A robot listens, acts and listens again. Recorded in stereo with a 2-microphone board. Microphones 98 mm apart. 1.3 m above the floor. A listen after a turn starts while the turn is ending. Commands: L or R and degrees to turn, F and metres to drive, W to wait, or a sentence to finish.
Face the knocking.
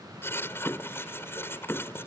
L20
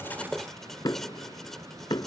L140
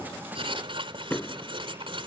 L15
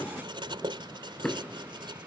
Facing the knocking.